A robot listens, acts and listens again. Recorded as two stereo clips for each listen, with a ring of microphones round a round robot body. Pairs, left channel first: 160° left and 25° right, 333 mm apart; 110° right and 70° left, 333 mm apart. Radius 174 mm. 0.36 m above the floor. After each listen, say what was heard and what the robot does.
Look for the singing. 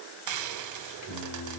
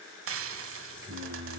The singing: 120° left. Turn 120° left.
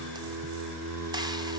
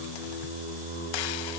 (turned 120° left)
Facing the singing.